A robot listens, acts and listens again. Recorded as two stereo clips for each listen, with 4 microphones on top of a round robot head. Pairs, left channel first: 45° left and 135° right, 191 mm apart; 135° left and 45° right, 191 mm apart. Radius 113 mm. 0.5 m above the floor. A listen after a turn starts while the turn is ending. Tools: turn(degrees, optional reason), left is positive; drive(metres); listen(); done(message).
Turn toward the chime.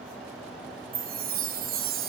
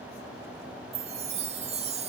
turn(degrees=-100, reason="The chime: 100° right.")
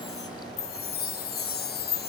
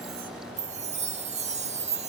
turn(degrees=10, reason="The chime is now 10° left.")
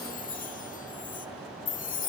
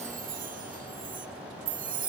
done("Found it: a chime, straight ahead.")